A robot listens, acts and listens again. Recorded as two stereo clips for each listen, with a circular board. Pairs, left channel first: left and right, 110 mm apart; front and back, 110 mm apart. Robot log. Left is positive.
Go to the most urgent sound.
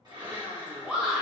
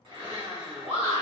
note: The shout: 170° right.
cmd yaw -170
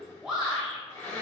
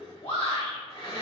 cmd fwd 1.0
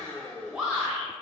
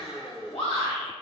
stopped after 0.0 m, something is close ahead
note: The shout is now 10° right.
cmd yaw -10
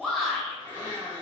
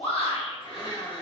end: Blocked. The shout is further on, straight ahead.